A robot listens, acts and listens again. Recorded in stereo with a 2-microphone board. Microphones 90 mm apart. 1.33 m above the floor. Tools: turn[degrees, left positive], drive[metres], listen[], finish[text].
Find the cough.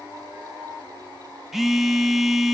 Action: listen[]
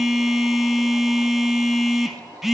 Action: listen[]
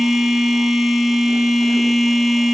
Action: finish[I can't make out a cough to turn to.]